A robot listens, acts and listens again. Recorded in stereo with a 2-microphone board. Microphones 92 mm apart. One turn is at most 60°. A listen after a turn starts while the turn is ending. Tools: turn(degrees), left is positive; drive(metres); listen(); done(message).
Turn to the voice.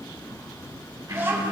turn(degrees=-30)
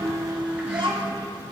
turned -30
turn(degrees=-60)
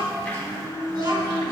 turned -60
turn(degrees=-45)
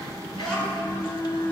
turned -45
turn(degrees=15)
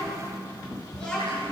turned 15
done("Facing the child speaking.")